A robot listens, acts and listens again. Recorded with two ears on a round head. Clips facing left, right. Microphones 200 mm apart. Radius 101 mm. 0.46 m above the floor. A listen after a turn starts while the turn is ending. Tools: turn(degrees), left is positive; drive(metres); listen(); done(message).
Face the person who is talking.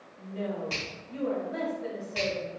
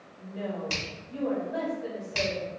turn(degrees=25)
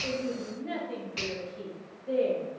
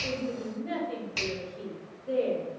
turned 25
done("Found it: a woman speaking, straight ahead.")